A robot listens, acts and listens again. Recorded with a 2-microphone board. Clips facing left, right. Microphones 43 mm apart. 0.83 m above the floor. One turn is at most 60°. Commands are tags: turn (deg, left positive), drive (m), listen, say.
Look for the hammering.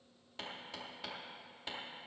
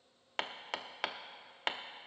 <turn deg="-60"/>
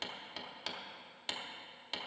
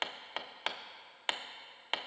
<turn deg="-50"/>
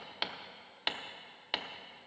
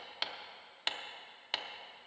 <say>Found it: hammering, straight ahead.</say>